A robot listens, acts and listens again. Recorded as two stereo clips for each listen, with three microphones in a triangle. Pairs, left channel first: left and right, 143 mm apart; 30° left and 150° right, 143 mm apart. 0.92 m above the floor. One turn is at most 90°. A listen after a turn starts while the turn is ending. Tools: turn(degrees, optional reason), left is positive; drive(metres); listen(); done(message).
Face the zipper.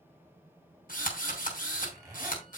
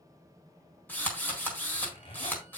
turn(degrees=-25, reason="The zipper: 25° right.")
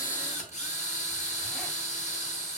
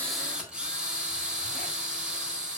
listen()
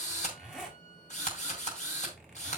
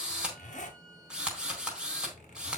done("Found it: a zipper, straight ahead, 2 to 4 m away.")